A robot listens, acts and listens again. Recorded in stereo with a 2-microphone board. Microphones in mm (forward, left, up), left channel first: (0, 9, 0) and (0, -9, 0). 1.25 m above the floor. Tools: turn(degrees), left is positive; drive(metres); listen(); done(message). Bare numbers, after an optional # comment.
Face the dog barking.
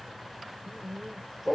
turn(30)
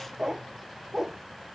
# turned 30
# So it is at 25° right.
turn(-25)
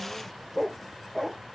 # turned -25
done("Found it: a dog barking, straight ahead.")